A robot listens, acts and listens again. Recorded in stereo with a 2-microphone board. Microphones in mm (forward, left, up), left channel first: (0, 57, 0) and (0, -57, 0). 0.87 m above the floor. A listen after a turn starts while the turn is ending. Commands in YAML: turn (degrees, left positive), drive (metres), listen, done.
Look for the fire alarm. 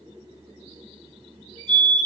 turn: -55
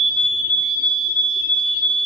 turn: -60
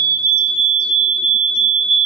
done: "Facing the fire alarm, 2 to 4 m away."